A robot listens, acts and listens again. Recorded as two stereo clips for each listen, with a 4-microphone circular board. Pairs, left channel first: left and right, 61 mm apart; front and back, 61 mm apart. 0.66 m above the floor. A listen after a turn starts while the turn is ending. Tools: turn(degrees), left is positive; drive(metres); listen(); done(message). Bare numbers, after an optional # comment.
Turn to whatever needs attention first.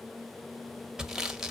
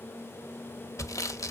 listen()
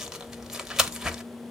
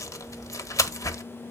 listen()
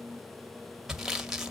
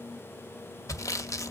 done("I can't make out anything urgent to turn to.")